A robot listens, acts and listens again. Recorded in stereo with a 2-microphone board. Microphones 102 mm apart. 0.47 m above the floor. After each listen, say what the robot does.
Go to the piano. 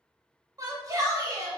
Keep listening.
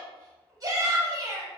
Keep listening.
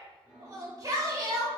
Turn 30° right.
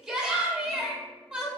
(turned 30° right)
Keep listening.
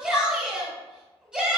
Keep listening.
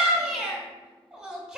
I heard a piano, but can't make it out now. It was about 20° left or 140° right. I did not reach it.